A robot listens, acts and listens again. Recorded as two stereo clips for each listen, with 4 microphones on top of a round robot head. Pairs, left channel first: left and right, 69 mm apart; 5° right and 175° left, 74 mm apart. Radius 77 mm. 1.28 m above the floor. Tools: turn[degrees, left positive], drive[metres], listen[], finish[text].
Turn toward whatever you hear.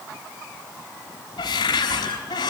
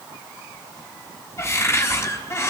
Thought: The cupboard door: 55° left.
Action: turn[55]
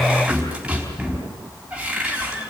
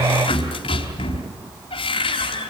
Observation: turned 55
Thought: The cupboard door is now 10° right.
Action: turn[-10]
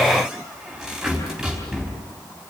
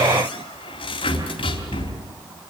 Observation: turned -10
Action: finish[Found it: a cupboard door, straight ahead.]